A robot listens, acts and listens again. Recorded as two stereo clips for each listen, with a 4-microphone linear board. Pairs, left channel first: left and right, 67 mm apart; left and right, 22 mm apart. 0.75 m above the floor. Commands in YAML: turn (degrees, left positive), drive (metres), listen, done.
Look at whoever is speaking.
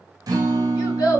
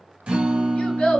turn: 75
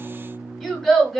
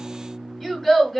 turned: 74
done: "Facing the child speaking, 1 to 2 m away."